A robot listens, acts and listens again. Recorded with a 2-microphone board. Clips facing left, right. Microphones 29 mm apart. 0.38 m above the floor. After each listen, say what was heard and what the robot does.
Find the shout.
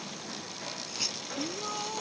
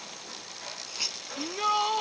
The shout: about 50° right or 130° right. Turn 50° right.
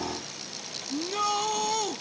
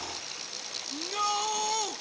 Facing the shout.